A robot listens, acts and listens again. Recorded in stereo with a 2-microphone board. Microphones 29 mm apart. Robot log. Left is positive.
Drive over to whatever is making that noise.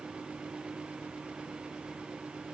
cmd idle
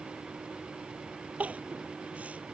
note: The crying: about 55° right or 125° right.
cmd yaw -55
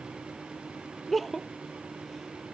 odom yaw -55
cmd fwd 1.0
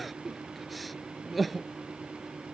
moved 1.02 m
cmd fwd 1.0
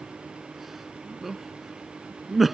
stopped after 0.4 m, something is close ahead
end: I am next to the crying.